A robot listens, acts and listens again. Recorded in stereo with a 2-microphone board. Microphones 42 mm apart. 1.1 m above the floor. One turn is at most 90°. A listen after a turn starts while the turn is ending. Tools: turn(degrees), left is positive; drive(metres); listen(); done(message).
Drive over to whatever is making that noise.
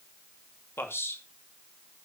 turn(degrees=70)
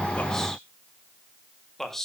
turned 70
drive(metres=1.0)
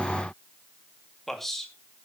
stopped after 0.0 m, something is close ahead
done("Blocked. The man speaking is further on, straight ahead.")